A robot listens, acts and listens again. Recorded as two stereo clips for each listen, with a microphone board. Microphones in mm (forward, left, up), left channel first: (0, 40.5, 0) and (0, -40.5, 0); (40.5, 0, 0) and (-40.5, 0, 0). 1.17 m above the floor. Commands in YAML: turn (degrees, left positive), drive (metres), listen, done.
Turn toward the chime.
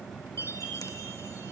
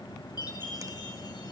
turn: 35
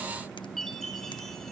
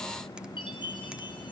done: "Found it: a chime, straight ahead."